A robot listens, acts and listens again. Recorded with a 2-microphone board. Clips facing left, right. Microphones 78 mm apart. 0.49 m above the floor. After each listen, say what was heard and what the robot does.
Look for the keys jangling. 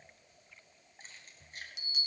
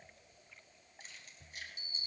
The keys jangling: about 40° left or 140° left. Turn 40° left.
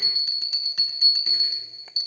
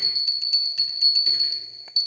Keep listening.
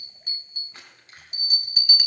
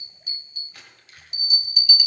The keys jangling: about 35° left or 145° left. Turn 35° left.
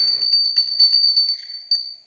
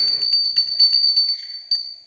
Keep listening.
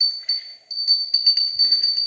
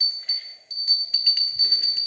Keep listening.
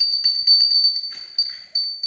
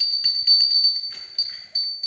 I heard keys jangling, but can't make it out now. It was about straight ahead or 110° left.